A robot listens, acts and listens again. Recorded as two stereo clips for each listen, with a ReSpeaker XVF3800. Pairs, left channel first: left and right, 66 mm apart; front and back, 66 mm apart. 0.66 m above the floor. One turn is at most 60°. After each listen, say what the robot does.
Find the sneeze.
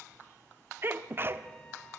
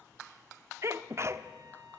Turn 60° right.
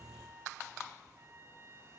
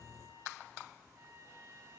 Turn 60° right.
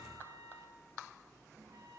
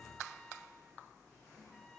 Turn 15° right.
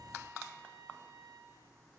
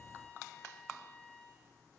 Facing where the sneeze came from. I can't hear it now.